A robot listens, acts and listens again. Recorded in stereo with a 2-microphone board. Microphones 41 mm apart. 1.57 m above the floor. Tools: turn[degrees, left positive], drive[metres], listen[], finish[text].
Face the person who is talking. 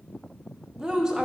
Thought: The woman speaking: about 15° right or 165° right.
Action: turn[-15]
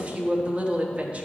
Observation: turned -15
Thought: So it is at 150° right.
Action: turn[-150]
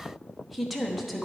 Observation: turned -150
Action: finish[Facing the woman speaking.]